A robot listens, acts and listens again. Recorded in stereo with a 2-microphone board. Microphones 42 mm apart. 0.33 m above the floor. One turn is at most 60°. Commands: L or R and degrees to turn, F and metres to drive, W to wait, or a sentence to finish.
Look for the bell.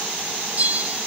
R35
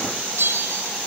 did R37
R60
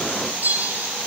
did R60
R45
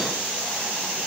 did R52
W
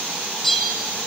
Facing the bell.